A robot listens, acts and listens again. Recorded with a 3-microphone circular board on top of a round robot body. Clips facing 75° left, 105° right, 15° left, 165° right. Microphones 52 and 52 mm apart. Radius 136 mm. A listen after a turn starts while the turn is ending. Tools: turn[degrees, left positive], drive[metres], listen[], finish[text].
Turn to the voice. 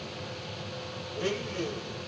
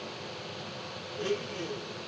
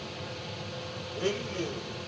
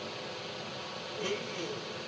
Action: listen[]
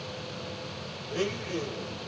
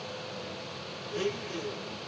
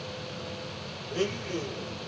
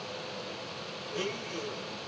Action: listen[]
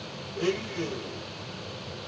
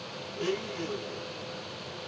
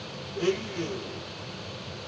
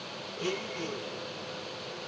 Action: finish[I can't make out anyone speaking, only a blender.]